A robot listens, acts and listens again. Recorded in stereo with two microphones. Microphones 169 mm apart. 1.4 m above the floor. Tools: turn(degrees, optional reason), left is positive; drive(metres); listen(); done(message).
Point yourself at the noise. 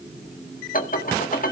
turn(degrees=55, reason="The dishes clattering: about 55° left or 125° left.")
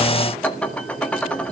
done("Facing the dishes clattering.")